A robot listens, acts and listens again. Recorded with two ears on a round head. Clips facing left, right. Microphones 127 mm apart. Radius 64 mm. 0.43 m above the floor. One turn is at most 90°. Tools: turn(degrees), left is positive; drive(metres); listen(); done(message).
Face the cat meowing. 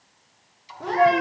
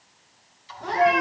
turn(degrees=90)
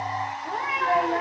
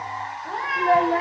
done("Found it: a cat meowing, straight ahead, over 4 m away.")